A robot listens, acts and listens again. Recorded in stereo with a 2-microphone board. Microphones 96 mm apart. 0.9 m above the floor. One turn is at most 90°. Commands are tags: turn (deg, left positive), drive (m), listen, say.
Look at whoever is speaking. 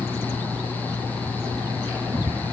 <listen/>
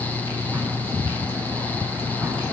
<listen/>
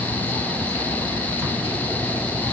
<say>I can't make out anyone speaking to turn to.</say>